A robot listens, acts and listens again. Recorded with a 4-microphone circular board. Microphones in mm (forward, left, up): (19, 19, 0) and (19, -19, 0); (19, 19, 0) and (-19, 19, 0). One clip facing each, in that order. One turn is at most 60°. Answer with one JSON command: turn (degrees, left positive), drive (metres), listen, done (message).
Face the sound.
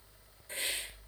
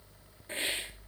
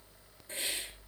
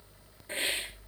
{"turn": -60}
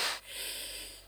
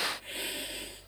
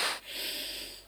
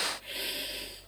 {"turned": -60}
{"turn": -60}
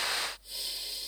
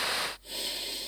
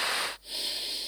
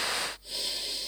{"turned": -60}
{"turn": -60}
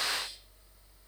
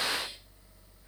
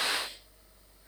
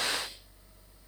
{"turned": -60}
{"turn": -15}
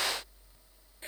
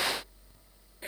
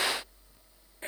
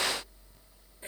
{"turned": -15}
{"listen": true}
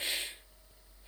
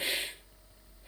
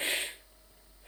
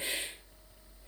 {"turn": -10}
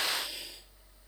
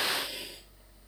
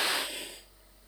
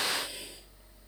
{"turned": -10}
{"listen": true}
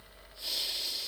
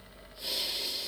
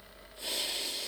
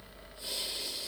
{"done": "Facing the hiss, 1 to 2 m away."}